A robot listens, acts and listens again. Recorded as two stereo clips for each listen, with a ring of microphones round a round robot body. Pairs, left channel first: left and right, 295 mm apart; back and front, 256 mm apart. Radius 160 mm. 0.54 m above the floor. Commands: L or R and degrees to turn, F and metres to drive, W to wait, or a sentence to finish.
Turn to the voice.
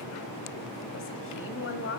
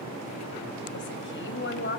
L140
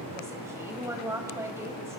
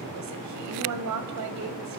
R10
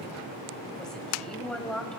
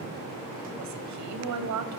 Facing the woman speaking.